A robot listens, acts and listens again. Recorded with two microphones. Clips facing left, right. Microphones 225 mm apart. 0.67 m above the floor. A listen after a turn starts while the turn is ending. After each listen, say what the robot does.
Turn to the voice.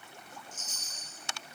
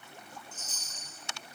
Keep listening.
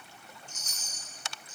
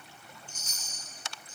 Keep listening.
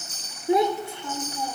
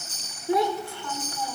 Turn 20° left.
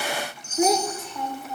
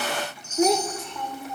Found it: a child speaking, straight ahead.